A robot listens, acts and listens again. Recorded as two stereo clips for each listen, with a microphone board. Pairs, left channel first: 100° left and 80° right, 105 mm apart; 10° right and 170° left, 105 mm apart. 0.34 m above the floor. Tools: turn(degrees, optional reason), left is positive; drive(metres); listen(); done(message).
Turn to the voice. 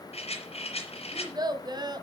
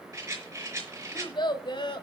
turn(degrees=-40, reason="The child speaking: 40° right.")
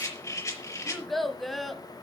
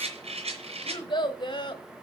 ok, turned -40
turn(degrees=15, reason="The child speaking is now 15° left.")
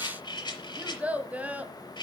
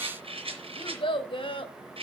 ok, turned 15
done("Facing the child speaking.")